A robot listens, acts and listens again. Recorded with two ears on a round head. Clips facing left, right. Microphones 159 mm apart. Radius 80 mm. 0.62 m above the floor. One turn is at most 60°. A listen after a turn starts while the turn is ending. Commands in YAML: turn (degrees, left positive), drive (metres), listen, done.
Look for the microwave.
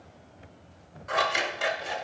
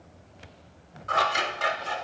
listen: true
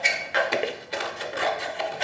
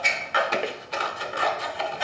listen: true
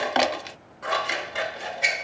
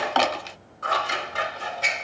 done: "I can't make out a microwave, only scissors."